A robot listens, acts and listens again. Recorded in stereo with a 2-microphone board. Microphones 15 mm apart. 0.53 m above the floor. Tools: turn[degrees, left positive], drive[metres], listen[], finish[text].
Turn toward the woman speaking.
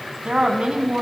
Action: turn[-90]
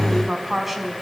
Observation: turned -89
Thought: So it is at 15° right.
Action: turn[-15]
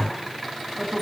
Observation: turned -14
Thought: The woman speaking is now 10° right.
Action: turn[-10]
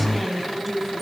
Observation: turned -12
Action: finish[Found it: a woman speaking, straight ahead, over 4 m away.]